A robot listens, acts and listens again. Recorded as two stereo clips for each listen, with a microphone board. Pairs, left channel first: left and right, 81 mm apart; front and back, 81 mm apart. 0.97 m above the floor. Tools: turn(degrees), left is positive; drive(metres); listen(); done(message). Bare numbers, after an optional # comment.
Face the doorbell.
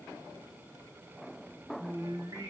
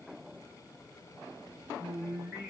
listen()
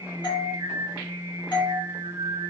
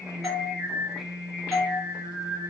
# The doorbell: 95° left.
turn(95)
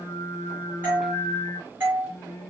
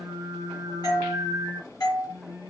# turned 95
# The doorbell is now 25° right.
turn(-25)
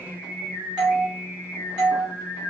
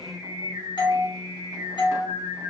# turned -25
# The doorbell is now 10° right.
turn(-10)
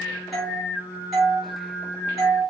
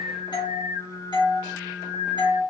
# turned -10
done("Found it: a doorbell, straight ahead.")